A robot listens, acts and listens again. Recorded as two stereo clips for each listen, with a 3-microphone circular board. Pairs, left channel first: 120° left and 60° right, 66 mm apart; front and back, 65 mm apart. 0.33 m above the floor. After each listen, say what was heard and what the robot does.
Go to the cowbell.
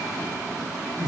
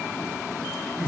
Keep listening.
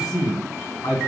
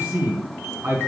Keep listening.
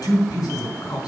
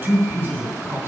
I can't make out a cowbell, only a man speaking.